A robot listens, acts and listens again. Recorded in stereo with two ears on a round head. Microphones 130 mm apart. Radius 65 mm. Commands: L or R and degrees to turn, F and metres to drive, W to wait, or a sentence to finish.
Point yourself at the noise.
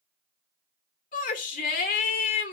L60
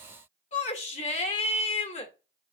L55
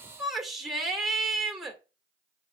Found it: a shout, straight ahead, 2 to 4 m away.